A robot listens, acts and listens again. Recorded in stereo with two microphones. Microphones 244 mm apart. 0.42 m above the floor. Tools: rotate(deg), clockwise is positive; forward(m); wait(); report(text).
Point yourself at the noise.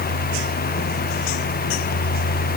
wait()
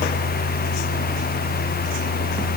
wait()
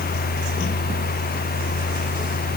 report("I can't make out anything to turn to.")